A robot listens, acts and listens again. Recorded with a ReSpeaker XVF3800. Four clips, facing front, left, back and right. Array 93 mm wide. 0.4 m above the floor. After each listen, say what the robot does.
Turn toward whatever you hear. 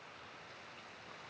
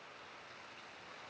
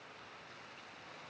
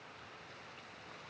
Keep listening.
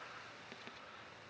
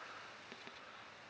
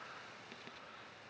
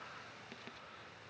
Keep listening.
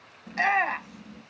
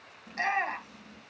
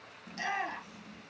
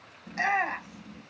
Facing the shout.